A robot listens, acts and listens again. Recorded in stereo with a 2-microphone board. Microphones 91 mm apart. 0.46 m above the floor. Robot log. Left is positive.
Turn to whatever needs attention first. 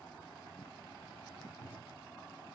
cmd idle
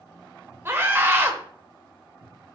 note: The scream: about 25° right or 155° right.
cmd yaw -25
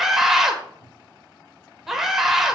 end: Found it: a scream, straight ahead, 1 to 2 m away.